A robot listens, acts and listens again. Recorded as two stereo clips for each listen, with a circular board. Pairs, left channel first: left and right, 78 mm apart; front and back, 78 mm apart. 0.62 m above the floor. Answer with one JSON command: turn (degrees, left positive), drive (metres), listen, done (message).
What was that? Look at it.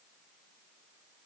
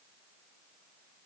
{"listen": true}
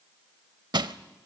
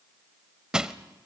{"turn": -100}
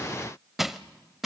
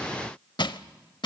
{"done": "Facing the crushing, under 1 m away."}